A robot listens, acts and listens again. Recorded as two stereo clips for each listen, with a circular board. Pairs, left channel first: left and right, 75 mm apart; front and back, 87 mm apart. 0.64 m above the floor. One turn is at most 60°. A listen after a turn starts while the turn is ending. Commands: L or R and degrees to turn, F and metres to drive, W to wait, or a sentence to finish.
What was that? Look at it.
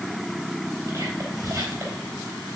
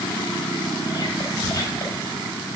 R45
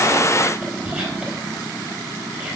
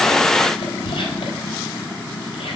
R10
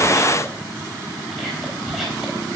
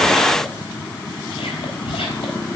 Facing the whispering, over 4 m away.